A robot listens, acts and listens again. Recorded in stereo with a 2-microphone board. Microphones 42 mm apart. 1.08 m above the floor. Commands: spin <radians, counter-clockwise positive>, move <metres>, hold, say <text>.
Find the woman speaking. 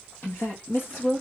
spin 1.13
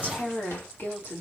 spin 0.96
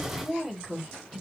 say Facing the woman speaking, 2 to 4 m away.